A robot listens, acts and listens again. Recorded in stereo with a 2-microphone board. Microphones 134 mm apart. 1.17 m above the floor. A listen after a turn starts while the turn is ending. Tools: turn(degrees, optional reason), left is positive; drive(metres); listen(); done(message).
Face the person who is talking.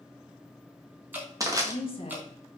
turn(degrees=45, reason="The woman speaking: about 45° left or 135° left.")
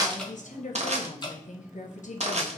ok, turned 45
turn(degrees=85, reason="So it is at 85° left.")
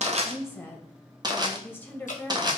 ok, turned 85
turn(degrees=15, reason="The woman speaking is now 15° left.")
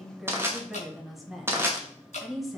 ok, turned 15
done("Found it: a woman speaking, straight ahead.")